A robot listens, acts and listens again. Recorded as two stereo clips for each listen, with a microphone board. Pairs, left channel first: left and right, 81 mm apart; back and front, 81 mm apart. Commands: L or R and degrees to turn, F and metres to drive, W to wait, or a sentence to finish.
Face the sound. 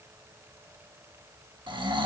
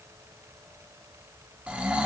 R75
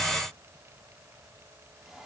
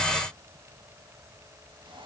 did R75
W
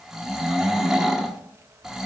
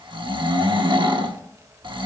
Found it: snoring, straight ahead.